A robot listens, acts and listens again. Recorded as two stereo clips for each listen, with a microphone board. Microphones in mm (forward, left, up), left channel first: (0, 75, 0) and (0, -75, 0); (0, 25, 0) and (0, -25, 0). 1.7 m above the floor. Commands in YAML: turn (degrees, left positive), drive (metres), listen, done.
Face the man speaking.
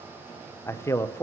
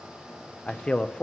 turn: 20
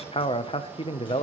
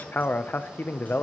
turn: 140
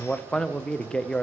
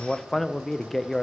done: "Facing the man speaking, under 1 m away."